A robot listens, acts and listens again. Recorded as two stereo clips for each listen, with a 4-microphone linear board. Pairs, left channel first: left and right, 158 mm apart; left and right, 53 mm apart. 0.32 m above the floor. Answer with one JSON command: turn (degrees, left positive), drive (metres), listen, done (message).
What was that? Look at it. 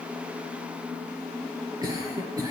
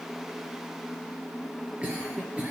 {"turn": -25}
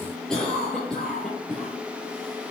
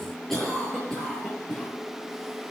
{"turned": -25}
{"done": "Found it: a cough, straight ahead."}